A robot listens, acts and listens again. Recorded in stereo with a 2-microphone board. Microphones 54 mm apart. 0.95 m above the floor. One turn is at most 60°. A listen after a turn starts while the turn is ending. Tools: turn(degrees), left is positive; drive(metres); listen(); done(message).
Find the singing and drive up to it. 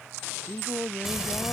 turn(degrees=35)
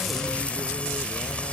listen()
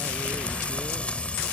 listen()
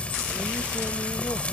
done("I heard singing, but can't make it out now. It was about straight ahead or 110° left. I did not reach it.")